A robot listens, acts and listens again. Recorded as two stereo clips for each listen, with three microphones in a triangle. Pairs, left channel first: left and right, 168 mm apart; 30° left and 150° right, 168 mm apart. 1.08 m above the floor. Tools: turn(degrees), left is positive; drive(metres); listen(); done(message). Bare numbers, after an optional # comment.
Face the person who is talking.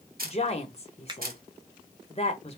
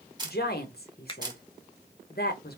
# The woman speaking: 40° left.
turn(40)
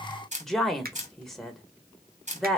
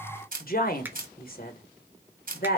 done("Facing the woman speaking.")